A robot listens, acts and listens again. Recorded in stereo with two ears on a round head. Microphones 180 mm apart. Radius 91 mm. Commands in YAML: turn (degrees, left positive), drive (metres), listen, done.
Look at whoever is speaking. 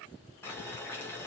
listen: true
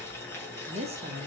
turn: -30
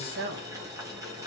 turn: -115
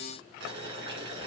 listen: true
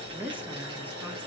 turn: -10
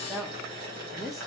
done: "Found it: a woman speaking, straight ahead."